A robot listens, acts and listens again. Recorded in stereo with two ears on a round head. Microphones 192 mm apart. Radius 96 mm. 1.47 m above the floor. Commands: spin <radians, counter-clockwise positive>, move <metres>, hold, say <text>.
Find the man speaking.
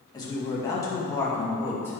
spin 0.52
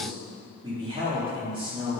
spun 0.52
spin -0.44
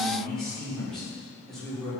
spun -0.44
say Facing the man speaking.